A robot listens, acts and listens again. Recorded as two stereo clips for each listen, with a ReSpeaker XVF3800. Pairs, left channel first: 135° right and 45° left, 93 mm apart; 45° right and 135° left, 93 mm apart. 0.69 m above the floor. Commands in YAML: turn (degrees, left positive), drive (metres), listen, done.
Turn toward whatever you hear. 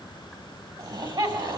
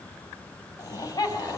turn: 10
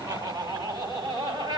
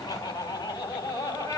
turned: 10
done: "Facing the laughter, over 4 m away."